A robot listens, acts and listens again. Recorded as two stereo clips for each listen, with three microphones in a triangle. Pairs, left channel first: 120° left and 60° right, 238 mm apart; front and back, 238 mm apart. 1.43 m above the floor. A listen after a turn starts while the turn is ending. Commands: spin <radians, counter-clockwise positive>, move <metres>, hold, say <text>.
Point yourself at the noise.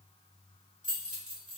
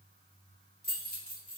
spin -0.96
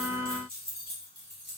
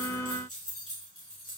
spin -0.44
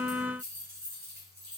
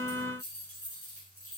spin -0.35
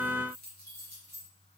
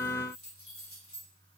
spin -0.35
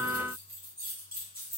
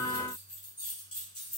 spin -0.17
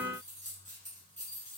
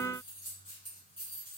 say Facing the keys jangling, 1 to 2 m away.